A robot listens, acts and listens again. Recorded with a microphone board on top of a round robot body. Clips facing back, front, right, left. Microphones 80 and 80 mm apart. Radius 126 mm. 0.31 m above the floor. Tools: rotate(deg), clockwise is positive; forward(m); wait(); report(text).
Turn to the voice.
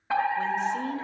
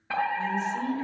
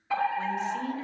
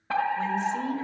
rotate(-150)
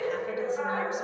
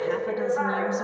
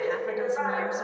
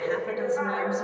wait()
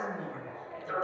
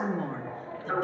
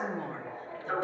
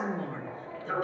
rotate(25)
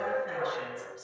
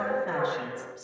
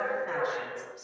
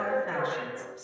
wait()
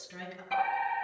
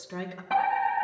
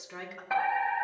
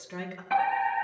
rotate(15)
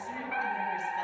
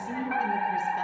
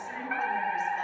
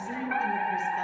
wait()
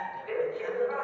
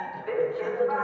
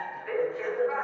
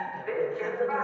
wait()
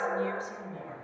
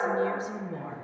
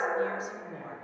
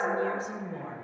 report("Facing the woman speaking, over 4 m away.")